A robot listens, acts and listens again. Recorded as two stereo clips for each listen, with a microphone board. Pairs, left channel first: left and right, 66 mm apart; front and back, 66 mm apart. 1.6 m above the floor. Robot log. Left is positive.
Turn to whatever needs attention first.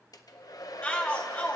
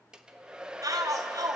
note: The shout: 160° left.
cmd yaw +160
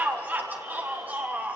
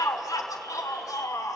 note: The shout is now 30° right.
cmd yaw -30
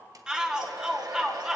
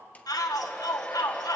note: The shout is now 10° right.
cmd yaw -10
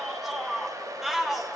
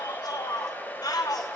end: Found it: a shout, straight ahead.